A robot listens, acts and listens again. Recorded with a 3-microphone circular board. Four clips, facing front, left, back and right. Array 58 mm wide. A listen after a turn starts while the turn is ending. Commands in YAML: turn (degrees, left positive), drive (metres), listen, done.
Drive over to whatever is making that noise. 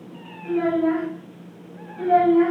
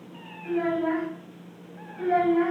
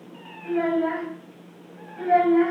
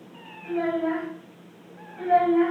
turn: -170
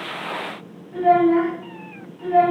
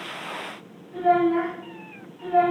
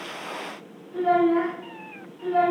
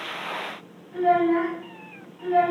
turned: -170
turn: -35
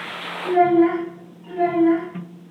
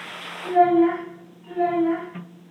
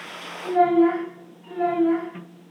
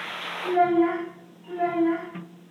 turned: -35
turn: 15
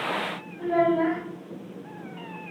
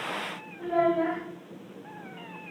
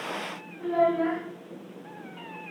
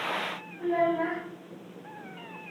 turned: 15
drive: 1.0
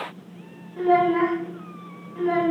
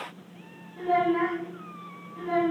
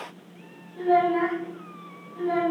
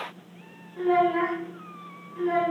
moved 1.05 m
turn: -15
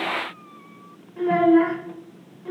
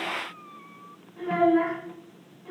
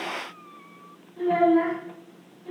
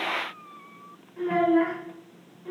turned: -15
drive: 1.0
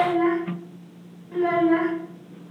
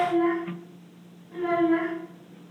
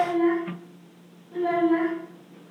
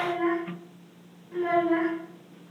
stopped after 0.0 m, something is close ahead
done: "Arrived at the child speaking, straight ahead."